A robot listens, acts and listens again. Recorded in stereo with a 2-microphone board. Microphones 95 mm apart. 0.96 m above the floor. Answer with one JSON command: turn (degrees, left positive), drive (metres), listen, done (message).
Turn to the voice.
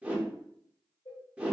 {"listen": true}
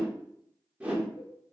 {"listen": true}
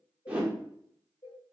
{"done": "I can't make out anyone speaking to turn to."}